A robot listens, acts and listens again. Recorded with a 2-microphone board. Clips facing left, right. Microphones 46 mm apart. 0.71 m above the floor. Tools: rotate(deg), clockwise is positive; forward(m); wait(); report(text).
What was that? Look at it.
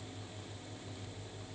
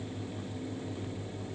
wait()
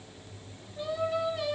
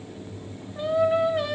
rotate(50)
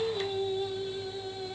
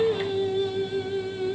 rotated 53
rotate(55)
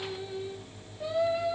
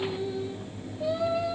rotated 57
rotate(-10)
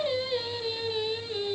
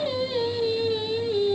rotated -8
report("Found it: singing, straight ahead.")